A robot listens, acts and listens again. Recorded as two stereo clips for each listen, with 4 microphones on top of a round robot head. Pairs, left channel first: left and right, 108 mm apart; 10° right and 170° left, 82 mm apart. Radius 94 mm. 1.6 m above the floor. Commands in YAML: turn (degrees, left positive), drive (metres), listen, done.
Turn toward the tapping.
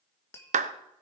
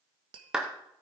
turn: 155
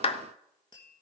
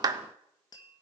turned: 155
turn: 30
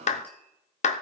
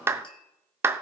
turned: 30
listen: true
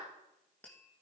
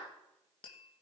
turn: 10
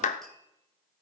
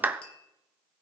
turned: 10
done: "Found it: tapping, straight ahead, 1 to 2 m away."